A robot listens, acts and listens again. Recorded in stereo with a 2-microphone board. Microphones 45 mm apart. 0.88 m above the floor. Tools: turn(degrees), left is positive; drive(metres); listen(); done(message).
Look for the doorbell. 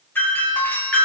turn(degrees=50)
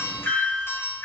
turn(degrees=75)
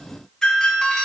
turn(degrees=15)
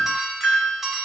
done("Facing the doorbell, over 4 m away.")